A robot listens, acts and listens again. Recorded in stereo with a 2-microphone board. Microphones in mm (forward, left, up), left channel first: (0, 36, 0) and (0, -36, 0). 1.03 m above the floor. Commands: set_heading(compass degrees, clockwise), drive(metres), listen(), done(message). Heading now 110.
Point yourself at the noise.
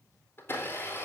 set_heading(75)
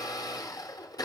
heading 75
set_heading(325)
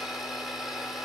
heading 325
done("Facing the blender.")